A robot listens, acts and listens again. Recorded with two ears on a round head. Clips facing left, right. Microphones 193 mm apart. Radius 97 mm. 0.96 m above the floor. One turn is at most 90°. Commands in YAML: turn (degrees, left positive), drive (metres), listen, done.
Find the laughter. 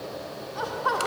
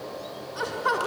turn: -30
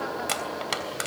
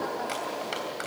done: "Facing the laughter."